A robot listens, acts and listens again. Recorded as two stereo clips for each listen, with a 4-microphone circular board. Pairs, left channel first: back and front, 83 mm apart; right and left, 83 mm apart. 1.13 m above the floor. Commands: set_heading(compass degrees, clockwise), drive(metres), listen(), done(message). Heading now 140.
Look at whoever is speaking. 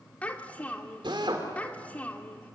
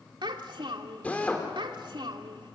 set_heading(30)
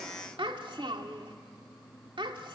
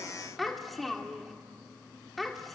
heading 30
done("Facing the child speaking.")